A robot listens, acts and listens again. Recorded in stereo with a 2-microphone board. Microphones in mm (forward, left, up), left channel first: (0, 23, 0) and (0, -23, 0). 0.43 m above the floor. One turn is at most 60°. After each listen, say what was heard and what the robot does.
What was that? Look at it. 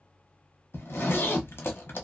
The zipper: about 60° left or 120° left. Turn 60° left.
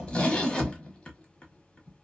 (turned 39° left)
So it is at 25° left. Turn 25° left.
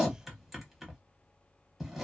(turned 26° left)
Facing the zipper, under 1 m away.